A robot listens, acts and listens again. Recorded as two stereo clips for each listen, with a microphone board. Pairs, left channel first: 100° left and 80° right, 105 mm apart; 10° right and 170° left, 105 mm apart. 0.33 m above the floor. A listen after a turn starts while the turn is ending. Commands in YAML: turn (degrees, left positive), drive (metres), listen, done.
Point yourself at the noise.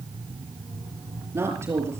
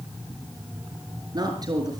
turn: -140
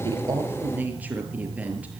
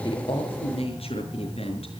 done: "Found it: a woman speaking, straight ahead."